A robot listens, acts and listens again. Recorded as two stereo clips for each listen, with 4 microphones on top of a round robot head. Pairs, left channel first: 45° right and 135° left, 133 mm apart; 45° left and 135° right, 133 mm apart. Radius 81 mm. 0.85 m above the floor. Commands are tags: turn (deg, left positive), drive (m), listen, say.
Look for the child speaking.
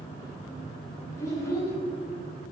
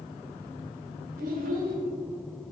<turn deg="-120"/>
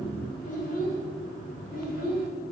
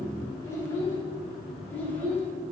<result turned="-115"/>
<turn deg="-30"/>
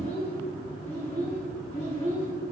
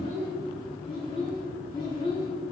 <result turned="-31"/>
<turn deg="-10"/>
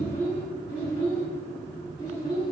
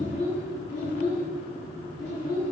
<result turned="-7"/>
<say>Facing the child speaking.</say>